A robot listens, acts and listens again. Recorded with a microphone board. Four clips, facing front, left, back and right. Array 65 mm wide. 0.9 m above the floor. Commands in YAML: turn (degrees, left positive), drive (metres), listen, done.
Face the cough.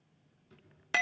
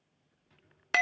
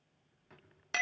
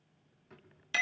listen: true
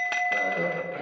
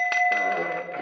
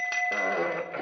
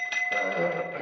turn: 145
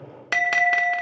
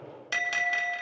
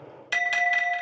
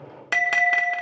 listen: true
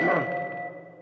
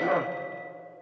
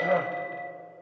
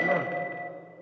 turn: 25
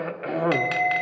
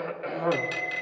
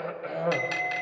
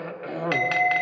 done: "Found it: a cough, straight ahead, 2 to 4 m away."